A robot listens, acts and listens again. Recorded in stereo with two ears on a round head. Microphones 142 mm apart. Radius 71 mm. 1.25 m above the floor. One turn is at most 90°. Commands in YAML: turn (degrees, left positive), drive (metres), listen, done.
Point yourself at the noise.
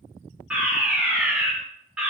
turn: -30
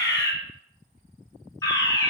turn: 20
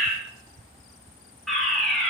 done: "Found it: a fire alarm, straight ahead."